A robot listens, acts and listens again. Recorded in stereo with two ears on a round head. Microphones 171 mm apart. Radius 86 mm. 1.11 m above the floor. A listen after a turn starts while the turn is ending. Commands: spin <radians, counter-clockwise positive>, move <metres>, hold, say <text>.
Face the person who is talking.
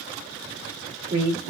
spin -0.87
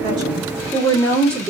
say Facing the woman speaking.